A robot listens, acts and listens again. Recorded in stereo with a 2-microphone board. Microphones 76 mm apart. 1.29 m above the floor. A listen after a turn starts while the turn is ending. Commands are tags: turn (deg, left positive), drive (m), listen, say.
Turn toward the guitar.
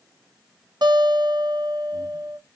<turn deg="-90"/>
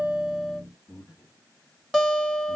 <say>Found it: a guitar, straight ahead.</say>